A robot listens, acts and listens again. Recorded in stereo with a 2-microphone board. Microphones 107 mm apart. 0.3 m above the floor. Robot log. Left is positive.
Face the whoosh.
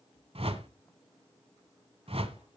note: The whoosh: about 65° right or 115° right.
cmd yaw -65
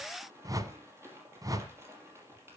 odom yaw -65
note: So it is at 35° right.
cmd yaw -35
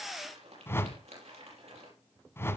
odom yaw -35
note: The whoosh is now 25° left.
cmd yaw +25
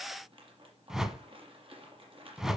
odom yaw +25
end: Facing the whoosh.